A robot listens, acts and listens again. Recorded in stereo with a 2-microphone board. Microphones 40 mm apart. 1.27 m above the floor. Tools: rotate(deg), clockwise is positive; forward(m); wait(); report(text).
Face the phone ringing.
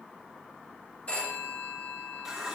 rotate(-35)
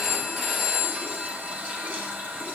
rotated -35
report("Facing the phone ringing, 2 to 4 m away.")